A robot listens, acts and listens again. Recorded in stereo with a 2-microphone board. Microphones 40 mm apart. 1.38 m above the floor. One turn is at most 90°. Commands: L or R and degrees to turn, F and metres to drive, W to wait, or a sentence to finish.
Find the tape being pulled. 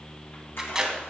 R30
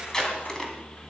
L15
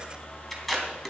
Found it: tape being pulled, straight ahead, 2 to 4 m away.